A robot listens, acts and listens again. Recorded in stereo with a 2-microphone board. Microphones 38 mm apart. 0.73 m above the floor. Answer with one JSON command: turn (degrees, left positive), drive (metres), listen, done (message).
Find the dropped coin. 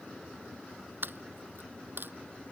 {"turn": -70}
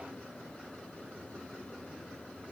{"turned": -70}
{"listen": true}
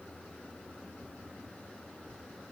{"done": "I heard a dropped coin, but can't make it out now. It was about straight ahead or 40° right."}